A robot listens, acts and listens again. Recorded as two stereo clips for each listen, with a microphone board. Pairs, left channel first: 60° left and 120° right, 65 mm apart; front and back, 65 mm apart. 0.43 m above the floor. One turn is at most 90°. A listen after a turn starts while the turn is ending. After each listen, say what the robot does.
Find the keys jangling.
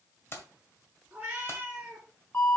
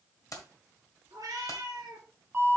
Turn 15° left.
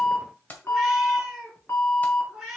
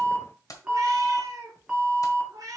Found it: keys jangling, straight ahead.